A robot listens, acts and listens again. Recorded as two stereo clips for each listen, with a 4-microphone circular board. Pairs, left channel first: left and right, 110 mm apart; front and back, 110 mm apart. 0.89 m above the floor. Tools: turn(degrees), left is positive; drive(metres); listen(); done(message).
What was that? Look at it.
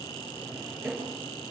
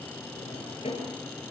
turn(degrees=-10)
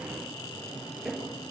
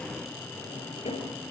done("Facing the drawer, over 4 m away.")